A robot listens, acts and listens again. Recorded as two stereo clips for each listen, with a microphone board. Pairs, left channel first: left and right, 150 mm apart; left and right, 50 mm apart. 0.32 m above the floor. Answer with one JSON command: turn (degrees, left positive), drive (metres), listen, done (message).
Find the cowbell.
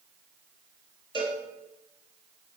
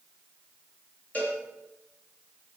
{"turn": 30}
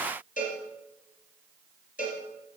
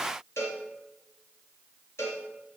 {"turn": 120}
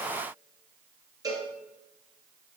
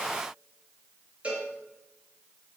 {"turn": -25}
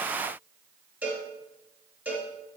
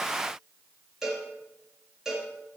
{"turn": -10}
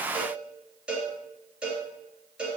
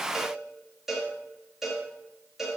{"done": "Found it: a cowbell, straight ahead, 2 to 4 m away."}